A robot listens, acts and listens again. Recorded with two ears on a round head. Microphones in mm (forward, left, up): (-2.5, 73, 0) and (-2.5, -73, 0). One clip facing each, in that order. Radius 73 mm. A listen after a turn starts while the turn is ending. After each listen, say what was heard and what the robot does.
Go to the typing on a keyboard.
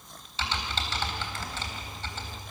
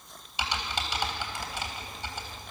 Turn 30° right.
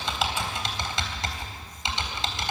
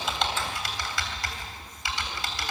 So it is at 20° left. Turn 20° left.
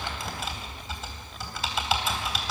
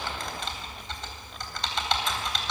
Drive 1.0 m forward.
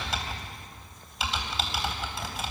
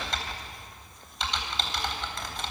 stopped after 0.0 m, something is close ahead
Blocked. The typing on a keyboard is further on, straight ahead.